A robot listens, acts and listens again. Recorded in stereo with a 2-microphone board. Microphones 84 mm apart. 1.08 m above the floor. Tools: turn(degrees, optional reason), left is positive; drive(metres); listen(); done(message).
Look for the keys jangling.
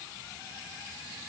listen()
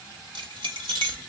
turn(degrees=-90)
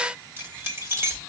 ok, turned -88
turn(degrees=-30, reason="So it is at 30° right.")
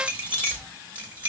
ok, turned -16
turn(degrees=-20, reason="The keys jangling is now 20° right.")
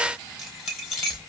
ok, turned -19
done("Found it: keys jangling, straight ahead.")